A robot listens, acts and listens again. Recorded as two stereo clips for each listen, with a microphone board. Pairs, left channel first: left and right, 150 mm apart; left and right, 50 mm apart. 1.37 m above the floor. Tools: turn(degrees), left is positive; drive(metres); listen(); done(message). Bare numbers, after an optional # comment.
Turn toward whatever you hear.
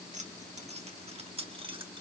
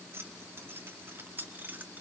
# The keys jangling: about 35° right or 145° right.
turn(-35)
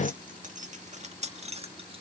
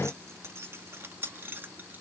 # The keys jangling: about 40° right or 140° right.
turn(-40)
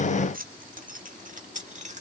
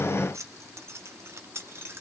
# So it is at 130° right.
turn(-130)
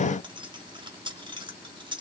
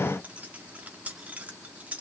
# The keys jangling is now 30° right.
turn(-30)
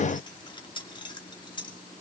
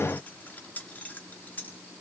# The keys jangling is now 30° left.
turn(30)
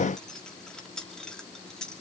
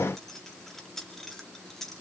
done("Facing the keys jangling, 2 to 4 m away.")